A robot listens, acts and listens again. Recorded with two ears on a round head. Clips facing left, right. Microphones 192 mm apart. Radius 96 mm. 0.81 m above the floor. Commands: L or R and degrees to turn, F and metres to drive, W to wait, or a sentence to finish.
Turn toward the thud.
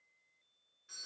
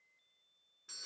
W
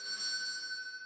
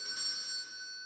W
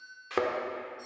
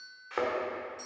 L50
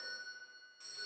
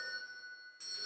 W
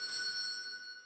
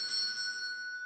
I heard a thud, but can't make it out now. It was about straight ahead or 80° left.